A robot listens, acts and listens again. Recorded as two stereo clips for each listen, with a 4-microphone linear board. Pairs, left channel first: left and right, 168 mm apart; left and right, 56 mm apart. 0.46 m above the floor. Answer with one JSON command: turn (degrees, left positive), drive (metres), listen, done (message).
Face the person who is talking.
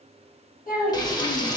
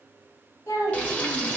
{"turn": 60}
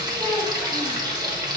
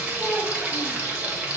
{"listen": true}
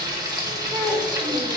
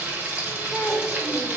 {"done": "Found it: a child speaking, straight ahead."}